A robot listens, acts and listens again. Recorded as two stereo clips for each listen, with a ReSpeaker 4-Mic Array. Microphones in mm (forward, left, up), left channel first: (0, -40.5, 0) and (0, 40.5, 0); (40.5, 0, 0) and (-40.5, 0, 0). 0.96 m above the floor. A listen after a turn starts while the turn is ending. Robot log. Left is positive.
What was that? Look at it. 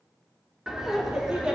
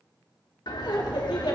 note: The laughter: 10° left.
cmd yaw +10
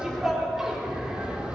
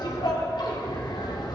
note: The laughter is now 15° left.
cmd yaw +15
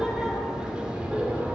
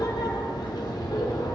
note: The laughter is now 15° left.
cmd yaw +15
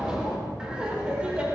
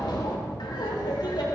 note: The laughter is now 15° left.
cmd yaw +15
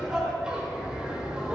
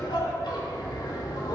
note: The laughter is now 10° left.
cmd yaw +10
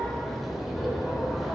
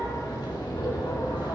end: Facing the laughter, 2 to 4 m away.